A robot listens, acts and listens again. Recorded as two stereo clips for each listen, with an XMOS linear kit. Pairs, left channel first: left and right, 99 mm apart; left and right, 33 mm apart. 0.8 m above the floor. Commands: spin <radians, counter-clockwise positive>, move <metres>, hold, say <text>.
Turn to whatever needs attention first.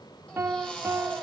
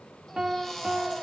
spin 0.52
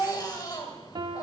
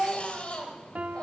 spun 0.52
spin 2.36
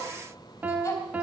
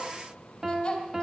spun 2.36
spin 0.52
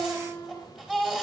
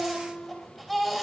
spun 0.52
say Facing the baby crying, 2 to 4 m away.